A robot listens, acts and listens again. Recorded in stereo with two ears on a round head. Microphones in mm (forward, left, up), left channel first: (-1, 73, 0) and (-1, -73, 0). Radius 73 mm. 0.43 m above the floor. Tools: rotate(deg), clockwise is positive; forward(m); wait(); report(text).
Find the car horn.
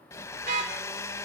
rotate(45)
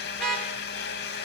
report("Facing the car horn, over 4 m away.")